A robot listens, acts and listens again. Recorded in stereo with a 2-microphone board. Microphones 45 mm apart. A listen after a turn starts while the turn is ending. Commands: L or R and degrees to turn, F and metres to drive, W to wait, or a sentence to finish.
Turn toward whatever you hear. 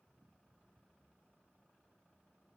W
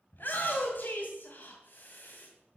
L50
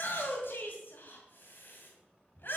L70
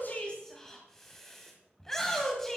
L10
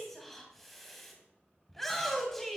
Found it: a shout, straight ahead, 2 to 4 m away.